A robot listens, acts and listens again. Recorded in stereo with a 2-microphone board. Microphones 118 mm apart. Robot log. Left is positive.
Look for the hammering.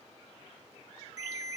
cmd idle
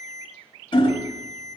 note: The hammering: about 45° left or 135° left.
cmd yaw +45
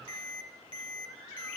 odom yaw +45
cmd idle
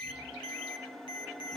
cmd idle
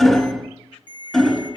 end: Found it: hammering, straight ahead, under 1 m away.